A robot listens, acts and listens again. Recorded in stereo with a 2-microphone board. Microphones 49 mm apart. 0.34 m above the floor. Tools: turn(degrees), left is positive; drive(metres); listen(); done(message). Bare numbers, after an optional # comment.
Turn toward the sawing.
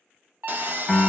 # The sawing: about 45° right or 135° right.
turn(-45)
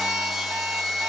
done("Found it: sawing, straight ahead, under 1 m away.")